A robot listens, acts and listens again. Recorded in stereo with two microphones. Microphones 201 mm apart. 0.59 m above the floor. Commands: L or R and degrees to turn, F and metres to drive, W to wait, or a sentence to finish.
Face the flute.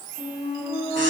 L30
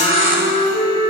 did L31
L120
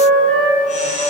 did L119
Facing the flute.